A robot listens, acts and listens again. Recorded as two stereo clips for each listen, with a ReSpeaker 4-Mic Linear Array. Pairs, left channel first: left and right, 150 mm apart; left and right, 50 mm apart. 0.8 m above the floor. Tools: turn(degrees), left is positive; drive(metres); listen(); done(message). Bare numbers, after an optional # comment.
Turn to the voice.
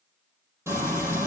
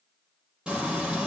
listen()
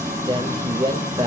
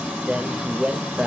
# The man speaking: about 30° right or 150° right.
turn(-30)
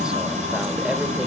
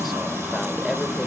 listen()
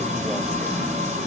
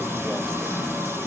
listen()
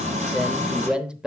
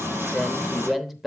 done("Facing the man speaking.")